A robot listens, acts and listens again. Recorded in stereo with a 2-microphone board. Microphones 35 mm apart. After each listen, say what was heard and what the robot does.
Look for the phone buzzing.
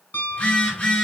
The phone buzzing: about 40° left or 140° left. Turn 40° left.
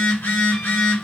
So it is at 105° left. Turn 105° left.
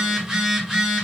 The phone buzzing is now 20° right. Turn 20° right.
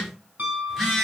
Facing the phone buzzing, 1 to 2 m away.